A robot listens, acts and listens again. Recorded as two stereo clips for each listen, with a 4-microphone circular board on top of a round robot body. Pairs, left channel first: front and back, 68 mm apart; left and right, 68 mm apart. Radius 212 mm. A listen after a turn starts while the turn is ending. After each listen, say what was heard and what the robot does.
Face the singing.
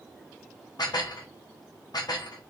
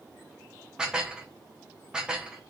Keep listening.
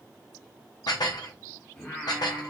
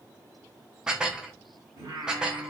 The singing: 55° right. Turn 55° right.
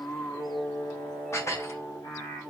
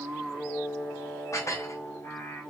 The singing is now 40° left. Turn 40° left.
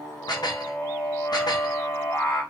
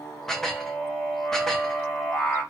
Facing the singing.